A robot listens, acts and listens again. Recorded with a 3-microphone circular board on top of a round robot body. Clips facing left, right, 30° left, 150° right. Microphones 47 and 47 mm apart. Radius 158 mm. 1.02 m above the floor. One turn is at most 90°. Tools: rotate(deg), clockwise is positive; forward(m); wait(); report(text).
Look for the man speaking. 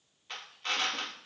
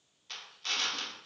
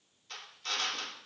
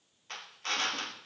wait()
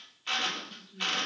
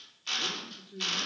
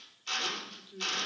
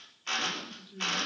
rotate(60)
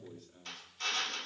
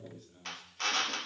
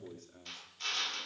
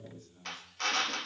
report("Facing the man speaking, 2 to 4 m away.")